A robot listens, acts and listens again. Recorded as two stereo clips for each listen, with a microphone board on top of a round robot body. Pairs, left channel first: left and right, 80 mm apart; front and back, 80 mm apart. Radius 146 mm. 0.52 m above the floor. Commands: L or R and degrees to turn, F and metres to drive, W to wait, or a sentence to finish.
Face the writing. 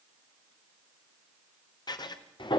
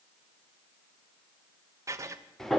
L125
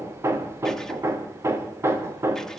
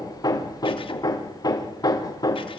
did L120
W
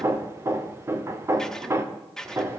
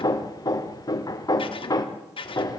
Found it: writing, straight ahead.